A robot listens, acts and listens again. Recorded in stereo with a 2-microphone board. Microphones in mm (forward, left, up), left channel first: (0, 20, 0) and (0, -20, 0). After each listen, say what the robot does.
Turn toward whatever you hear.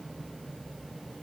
Keep listening.
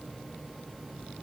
Keep listening.
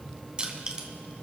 Turn 25° right.
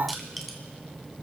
Found it: crushing, straight ahead.